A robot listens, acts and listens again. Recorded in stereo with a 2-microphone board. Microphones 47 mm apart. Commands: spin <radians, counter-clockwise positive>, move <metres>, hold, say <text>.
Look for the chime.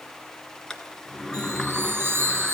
spin -0.87
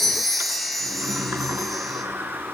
say Facing the chime.